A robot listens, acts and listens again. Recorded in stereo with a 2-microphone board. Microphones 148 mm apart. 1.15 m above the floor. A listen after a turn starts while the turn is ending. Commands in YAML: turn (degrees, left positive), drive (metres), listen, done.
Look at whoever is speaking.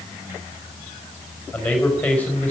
turn: 30
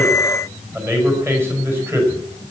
turn: -15
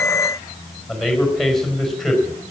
done: "Facing the man speaking, over 4 m away."